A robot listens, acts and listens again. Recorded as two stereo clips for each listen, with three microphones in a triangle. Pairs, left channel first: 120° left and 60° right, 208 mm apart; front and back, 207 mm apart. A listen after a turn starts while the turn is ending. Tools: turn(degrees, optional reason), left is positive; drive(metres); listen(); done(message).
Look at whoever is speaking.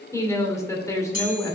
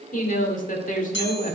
turn(degrees=45, reason="The woman speaking: 45° left.")
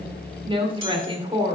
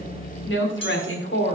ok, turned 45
done("Found it: a woman speaking, straight ahead, 2 to 4 m away.")